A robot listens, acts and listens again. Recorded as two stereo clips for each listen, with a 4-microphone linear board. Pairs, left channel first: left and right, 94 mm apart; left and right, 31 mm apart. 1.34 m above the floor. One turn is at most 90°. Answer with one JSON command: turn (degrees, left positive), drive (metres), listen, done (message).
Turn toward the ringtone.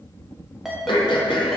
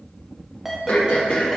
{"turn": -30}
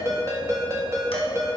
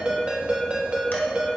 {"turn": -90}
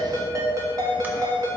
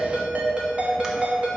{"turn": -40}
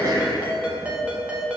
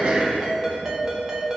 {"turn": -15}
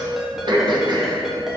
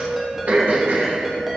{"done": "Found it: a ringtone, straight ahead."}